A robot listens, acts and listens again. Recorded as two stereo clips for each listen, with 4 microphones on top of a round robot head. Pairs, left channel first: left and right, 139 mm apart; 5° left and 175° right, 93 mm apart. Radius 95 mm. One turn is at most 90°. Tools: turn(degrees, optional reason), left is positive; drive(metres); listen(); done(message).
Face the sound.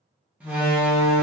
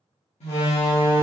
turn(degrees=-10, reason="The door slam: 10° right.")
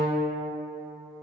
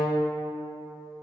done("I heard a door slam from this way, but can't make it out now.")